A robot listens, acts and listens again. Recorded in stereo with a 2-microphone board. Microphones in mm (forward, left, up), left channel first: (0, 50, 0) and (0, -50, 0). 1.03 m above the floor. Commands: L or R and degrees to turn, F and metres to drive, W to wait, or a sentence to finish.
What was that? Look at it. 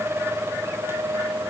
W
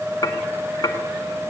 L35
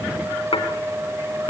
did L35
L110
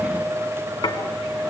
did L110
L50
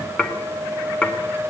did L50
L15
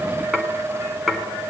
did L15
Found it: dishes clattering, straight ahead, 2 to 4 m away.